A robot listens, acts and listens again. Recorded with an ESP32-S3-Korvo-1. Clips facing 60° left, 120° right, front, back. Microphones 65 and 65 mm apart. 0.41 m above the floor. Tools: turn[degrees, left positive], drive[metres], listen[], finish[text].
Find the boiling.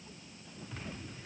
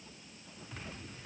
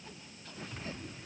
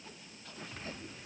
Action: listen[]
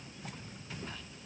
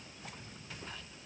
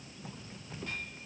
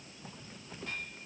Action: listen[]
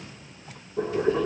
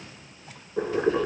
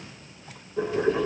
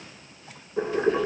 Thought: The boiling: 115° right.
Action: turn[-115]
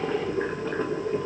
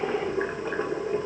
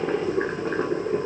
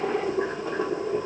Thought: The boiling is now 45° right.
Action: turn[-45]
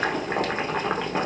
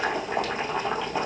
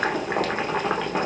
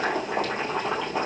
Thought: The boiling is now 25° left.
Action: turn[25]
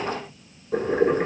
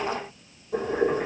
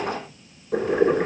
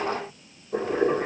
Thought: The boiling is now 20° left.
Action: turn[20]
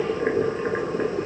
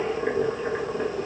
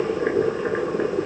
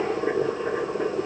Action: finish[Facing the boiling, under 1 m away.]